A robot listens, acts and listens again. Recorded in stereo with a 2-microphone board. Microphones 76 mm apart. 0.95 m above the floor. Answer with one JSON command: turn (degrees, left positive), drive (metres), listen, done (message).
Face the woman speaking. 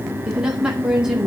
{"turn": -30}
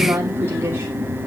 {"turn": -145}
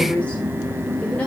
{"listen": true}
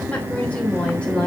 {"turn": 15}
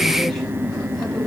{"listen": true}
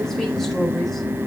{"listen": true}
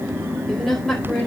{"done": "Facing the woman speaking, over 4 m away."}